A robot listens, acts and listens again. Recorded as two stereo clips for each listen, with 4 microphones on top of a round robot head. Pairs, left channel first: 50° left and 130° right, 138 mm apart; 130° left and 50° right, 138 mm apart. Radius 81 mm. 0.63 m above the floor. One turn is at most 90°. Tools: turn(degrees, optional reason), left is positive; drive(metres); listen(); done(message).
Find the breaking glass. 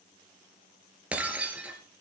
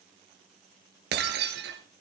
turn(degrees=-50, reason="The breaking glass: 50° right.")
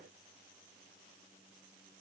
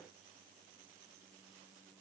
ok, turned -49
done("Facing where the breaking glass came from. I can't hear it now.")